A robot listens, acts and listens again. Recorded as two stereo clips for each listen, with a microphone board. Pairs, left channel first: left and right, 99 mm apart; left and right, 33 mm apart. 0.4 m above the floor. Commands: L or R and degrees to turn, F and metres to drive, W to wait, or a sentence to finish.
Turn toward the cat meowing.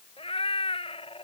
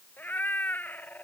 L90
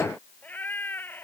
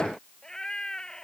L20
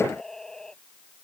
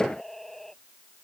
Facing the cat meowing.